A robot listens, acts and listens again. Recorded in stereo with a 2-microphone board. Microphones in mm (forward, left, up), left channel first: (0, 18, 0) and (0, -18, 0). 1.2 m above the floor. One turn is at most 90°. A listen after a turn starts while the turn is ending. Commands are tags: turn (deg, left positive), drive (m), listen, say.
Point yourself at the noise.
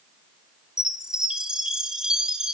<turn deg="-20"/>
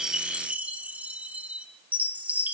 <turn deg="-90"/>
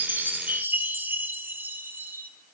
<turn deg="-75"/>
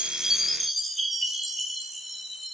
<say>Facing the chime, 1 to 2 m away.</say>